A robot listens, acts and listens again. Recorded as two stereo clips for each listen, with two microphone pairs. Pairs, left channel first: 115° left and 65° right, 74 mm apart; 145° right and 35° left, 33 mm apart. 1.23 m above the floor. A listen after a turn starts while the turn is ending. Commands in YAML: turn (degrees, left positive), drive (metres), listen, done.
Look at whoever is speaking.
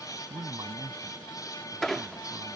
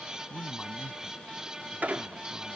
turn: -90
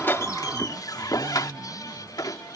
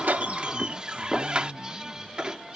turn: -25
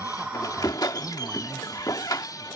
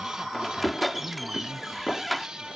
turn: 10
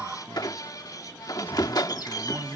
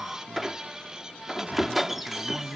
done: "Facing the man speaking."